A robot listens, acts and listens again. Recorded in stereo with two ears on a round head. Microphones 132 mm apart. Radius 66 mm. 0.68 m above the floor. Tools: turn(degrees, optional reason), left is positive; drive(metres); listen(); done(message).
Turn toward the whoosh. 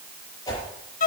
turn(degrees=25, reason="The whoosh: about 25° left or 155° left.")
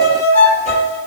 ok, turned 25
listen()
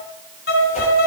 turn(degrees=130, reason="So it is at 130° left.")
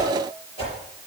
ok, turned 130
turn(degrees=40, reason="The whoosh is now 40° left.")
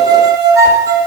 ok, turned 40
listen()
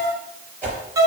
turn(degrees=10, reason="The whoosh is now 10° left.")
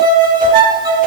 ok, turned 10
listen()
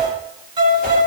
listen()
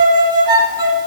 done("I heard a whoosh from this way, but can't make it out now.")